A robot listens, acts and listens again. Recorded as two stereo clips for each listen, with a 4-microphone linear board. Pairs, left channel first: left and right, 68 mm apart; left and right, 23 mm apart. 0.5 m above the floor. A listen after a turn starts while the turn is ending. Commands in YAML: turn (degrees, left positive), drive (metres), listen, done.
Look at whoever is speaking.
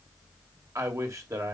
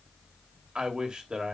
turn: -50
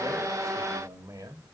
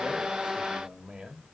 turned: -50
turn: -65
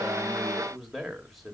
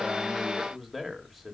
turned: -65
done: "Found it: a man speaking, straight ahead, 2 to 4 m away."